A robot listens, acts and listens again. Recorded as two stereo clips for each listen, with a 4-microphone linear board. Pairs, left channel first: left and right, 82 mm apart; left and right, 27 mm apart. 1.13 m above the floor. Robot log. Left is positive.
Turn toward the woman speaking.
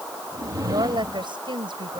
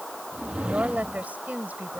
cmd yaw -90
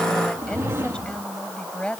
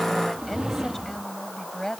note: So it is at 10° left.
cmd yaw +10
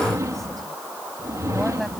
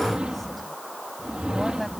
cmd idle
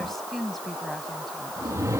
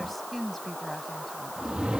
end: Found it: a woman speaking, straight ahead.